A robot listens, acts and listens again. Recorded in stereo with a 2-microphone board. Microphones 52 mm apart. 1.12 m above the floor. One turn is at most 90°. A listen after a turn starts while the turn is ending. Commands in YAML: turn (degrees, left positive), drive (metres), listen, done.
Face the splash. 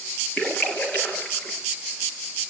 turn: 25
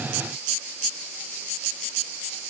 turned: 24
listen: true
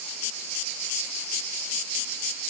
done: "I heard a splash, but can't make it out now. It was about straight ahead or 130° left."